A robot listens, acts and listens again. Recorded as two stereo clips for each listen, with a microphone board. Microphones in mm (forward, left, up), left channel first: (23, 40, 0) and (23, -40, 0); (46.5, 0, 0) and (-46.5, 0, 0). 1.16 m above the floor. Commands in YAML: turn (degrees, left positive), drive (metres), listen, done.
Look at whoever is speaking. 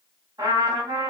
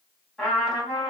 listen: true
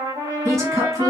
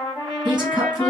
turn: -140
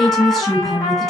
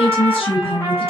done: "Facing the woman speaking."